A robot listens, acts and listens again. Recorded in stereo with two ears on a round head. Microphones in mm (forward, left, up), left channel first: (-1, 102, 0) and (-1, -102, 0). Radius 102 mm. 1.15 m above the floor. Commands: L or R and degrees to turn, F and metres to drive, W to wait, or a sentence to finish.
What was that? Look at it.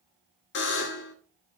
L55
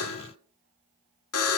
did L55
L75
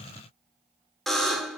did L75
Found it: a buzzer, straight ahead.